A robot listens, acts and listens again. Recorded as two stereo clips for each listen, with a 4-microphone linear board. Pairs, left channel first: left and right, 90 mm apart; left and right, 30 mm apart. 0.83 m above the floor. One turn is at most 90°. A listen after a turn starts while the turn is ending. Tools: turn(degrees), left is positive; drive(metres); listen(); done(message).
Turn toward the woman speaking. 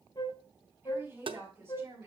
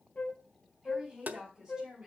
turn(degrees=-30)
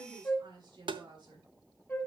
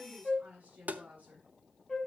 turn(degrees=-90)
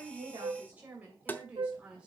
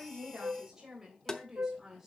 turn(degrees=-10)
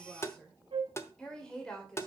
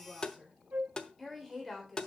turn(degrees=10)
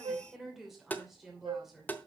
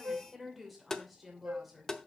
done("Facing the woman speaking, 2 to 4 m away.")